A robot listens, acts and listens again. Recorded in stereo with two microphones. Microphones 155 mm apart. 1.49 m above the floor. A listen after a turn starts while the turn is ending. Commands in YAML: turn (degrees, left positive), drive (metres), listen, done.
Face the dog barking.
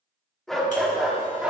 turn: -30
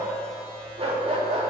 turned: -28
turn: -135
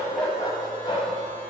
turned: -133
turn: 35
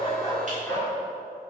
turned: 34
turn: 15
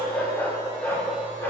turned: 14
turn: 10
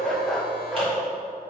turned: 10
done: "Found it: a dog barking, straight ahead, 1 to 2 m away."